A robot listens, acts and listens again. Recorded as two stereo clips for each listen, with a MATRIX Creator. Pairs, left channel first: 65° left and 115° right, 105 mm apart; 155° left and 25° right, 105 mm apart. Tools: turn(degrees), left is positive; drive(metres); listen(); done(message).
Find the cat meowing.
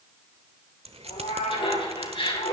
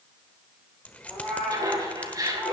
turn(degrees=75)
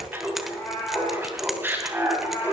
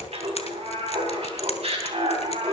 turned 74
done("Found it: a cat meowing, straight ahead, over 4 m away.")